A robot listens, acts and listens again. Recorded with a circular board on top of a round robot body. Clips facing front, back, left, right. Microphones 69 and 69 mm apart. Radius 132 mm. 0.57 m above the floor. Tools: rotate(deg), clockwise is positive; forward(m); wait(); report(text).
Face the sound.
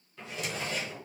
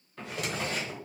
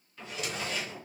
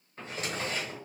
rotate(145)
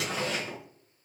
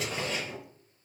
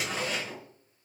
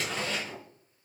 rotate(-10)
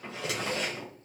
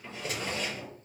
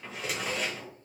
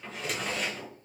report("Facing the drawer, 1 to 2 m away.")